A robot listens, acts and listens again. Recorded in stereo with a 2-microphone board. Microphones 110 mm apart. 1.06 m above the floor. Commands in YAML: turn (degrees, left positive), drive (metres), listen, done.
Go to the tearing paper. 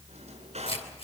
turn: 70
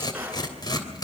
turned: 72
turn: 40
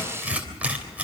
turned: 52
turn: -15
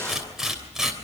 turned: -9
drive: 1.0
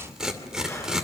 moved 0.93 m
drive: 1.0
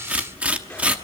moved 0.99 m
turn: -15
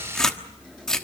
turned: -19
drive: 1.0
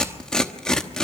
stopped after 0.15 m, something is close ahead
done: "I am next to the tearing paper."